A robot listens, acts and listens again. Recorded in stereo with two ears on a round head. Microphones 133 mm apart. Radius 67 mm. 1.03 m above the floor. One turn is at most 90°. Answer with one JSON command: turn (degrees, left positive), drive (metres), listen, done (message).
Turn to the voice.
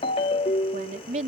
{"turn": -50}
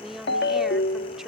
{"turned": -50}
{"done": "Found it: a woman speaking, straight ahead."}